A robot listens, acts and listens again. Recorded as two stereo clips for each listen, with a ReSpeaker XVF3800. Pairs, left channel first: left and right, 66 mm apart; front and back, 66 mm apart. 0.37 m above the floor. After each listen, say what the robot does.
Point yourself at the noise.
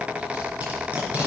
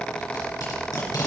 Turn 20° right.
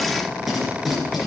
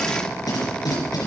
Found it: tape being pulled, straight ahead.